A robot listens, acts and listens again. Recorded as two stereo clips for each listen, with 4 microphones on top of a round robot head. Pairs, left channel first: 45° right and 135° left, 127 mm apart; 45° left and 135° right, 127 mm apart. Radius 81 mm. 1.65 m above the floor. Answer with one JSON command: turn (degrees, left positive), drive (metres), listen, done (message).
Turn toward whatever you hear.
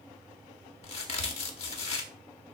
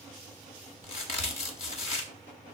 {"done": "Facing the crack, 1 to 2 m away."}